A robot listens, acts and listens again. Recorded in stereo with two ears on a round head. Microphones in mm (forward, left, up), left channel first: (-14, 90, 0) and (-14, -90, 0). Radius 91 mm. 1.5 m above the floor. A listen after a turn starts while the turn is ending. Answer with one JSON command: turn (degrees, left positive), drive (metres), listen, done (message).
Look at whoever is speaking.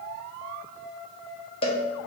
{"listen": true}
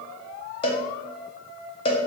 {"listen": true}
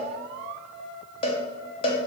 {"done": "I can't make out anyone speaking, only a cowbell."}